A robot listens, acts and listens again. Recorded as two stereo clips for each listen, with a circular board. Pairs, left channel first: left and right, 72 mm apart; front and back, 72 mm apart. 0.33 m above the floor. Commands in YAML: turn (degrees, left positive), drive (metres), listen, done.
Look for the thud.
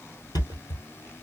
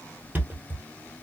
turn: 115
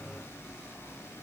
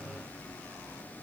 done: "Facing where the thud came from. I can't hear it now."